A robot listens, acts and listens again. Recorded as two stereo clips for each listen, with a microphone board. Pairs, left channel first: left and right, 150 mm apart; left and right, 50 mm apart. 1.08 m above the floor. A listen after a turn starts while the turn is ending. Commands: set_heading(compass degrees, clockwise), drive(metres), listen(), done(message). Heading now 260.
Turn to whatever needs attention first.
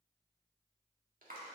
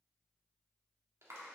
listen()
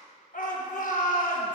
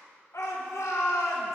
set_heading(195)
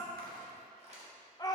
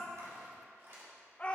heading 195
set_heading(165)
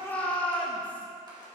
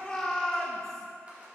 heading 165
set_heading(155)
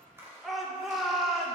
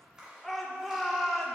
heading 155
done("Found it: a shout, straight ahead, 1 to 2 m away.")